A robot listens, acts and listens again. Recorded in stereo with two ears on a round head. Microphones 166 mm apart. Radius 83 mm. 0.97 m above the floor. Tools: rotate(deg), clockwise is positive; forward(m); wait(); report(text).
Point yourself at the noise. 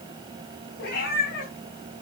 rotate(-55)
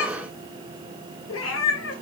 rotate(-80)
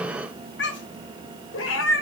rotate(-80)
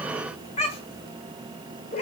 rotate(-35)
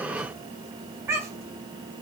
rotate(15)
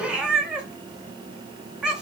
report("Facing the cat meowing.")